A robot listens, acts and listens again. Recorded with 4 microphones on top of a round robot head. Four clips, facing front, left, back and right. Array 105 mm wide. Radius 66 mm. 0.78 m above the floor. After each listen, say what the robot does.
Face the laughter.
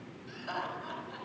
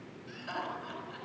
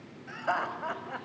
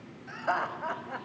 Turn 130° right.
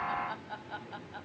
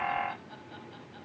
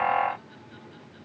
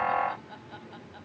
Turn 10° right.
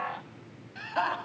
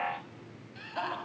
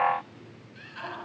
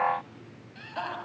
Facing the laughter.